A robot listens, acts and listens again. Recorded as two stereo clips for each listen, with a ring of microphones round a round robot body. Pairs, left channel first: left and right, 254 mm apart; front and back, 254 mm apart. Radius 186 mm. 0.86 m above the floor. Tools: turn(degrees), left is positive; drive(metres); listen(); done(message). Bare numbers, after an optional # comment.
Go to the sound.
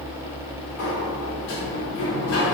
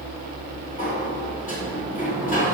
# The sliding door: 60° left.
turn(60)
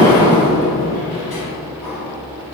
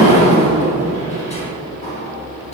drive(1.0)
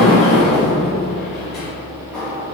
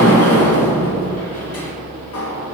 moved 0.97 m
drive(1.0)
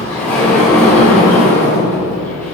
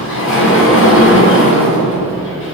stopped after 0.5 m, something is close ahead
done("Arrived at the sliding door, straight ahead.")